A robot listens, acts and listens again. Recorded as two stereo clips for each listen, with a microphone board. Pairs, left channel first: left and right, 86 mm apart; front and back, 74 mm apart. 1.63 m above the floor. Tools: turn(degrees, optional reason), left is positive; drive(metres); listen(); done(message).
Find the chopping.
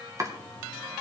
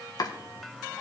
turn(degrees=-35, reason="The chopping: 35° right.")
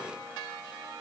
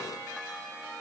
listen()
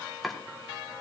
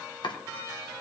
done("Found it: chopping, straight ahead.")